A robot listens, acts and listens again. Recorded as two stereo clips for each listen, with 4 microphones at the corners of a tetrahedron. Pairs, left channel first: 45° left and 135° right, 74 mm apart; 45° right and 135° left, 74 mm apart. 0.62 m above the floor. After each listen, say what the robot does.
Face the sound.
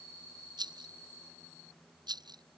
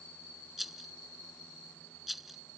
Turn 135° right.
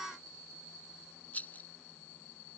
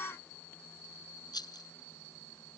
Turn 25° right.
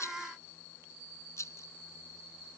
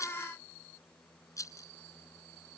Found it: a rattle, straight ahead.